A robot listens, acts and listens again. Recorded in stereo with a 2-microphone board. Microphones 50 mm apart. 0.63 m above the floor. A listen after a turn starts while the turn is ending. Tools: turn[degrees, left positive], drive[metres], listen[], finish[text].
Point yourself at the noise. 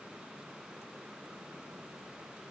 Action: listen[]
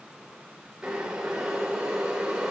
Action: turn[-30]
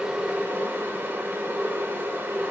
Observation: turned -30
Thought: So it is at 135° right.
Action: turn[-135]
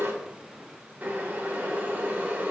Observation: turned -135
Thought: The boiling is now 40° right.
Action: turn[-40]
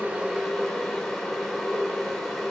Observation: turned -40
Action: finish[Found it: boiling, straight ahead.]